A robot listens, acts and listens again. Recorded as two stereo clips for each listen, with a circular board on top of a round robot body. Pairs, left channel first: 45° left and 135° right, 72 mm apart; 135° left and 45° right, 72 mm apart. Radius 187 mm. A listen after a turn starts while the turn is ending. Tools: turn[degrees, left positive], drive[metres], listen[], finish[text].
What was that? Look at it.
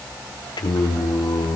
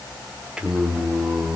Thought: The singing: 35° left.
Action: turn[35]
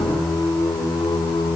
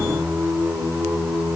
Thought: The singing is now 25° left.
Action: turn[25]
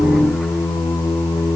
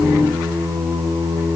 Action: finish[Facing the singing, over 4 m away.]